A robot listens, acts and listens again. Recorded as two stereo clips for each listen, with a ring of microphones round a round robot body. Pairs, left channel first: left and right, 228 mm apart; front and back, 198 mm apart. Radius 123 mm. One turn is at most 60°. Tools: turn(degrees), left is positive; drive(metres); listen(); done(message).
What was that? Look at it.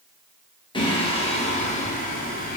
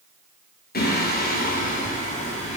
turn(degrees=35)
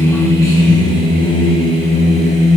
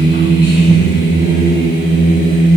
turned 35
turn(degrees=35)
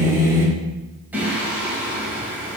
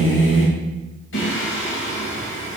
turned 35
done("Found it: singing, straight ahead, 2 to 4 m away.")